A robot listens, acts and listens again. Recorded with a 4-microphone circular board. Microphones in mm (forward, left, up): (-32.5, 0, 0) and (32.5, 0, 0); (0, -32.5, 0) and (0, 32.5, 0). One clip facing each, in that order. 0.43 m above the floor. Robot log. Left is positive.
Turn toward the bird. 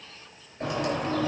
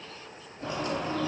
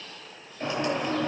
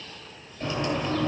note: The bird: 155° right.
cmd yaw -155
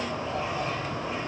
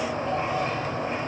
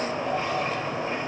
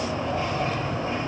note: The bird is now 30° right.
cmd yaw -30
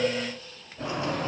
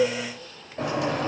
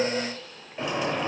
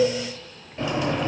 end: Found it: a bird, straight ahead.